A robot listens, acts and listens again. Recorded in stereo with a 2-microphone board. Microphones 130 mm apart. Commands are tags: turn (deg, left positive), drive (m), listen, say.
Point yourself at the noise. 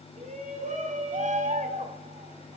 <turn deg="-90"/>
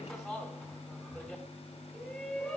<say>Facing the shout, over 4 m away.</say>